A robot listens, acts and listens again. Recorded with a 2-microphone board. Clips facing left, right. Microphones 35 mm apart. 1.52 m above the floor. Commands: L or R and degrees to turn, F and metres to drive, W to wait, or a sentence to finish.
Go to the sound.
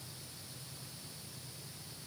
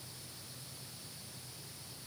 W
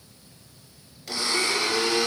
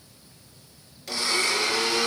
L30
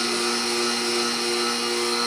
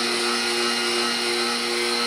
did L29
R30
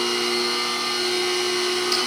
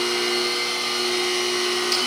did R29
F1.0
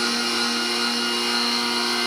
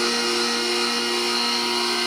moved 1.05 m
L10
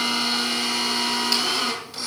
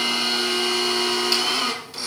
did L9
F1.0
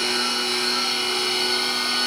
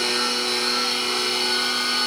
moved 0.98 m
F1.0
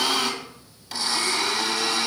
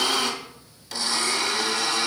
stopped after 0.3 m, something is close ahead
L10
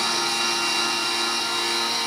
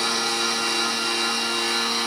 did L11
Arrived at the blender, straight ahead.